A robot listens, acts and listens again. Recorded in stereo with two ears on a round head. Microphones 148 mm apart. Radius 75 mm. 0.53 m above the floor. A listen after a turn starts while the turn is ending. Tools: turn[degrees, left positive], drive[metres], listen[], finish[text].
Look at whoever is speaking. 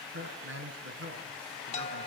Action: turn[-90]
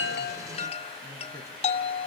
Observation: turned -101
Thought: So it is at 15° left.
Action: turn[15]
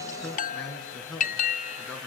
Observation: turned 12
Action: finish[Found it: a man speaking, straight ahead, over 4 m away.]